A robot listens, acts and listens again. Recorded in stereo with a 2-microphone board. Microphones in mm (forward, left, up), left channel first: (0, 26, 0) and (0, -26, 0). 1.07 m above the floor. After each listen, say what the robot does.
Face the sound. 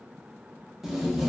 Turn 30° right.
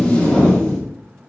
Turn 25° left.
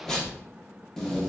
Turn 10° left.
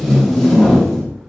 Found it: tape being pulled, straight ahead, under 1 m away.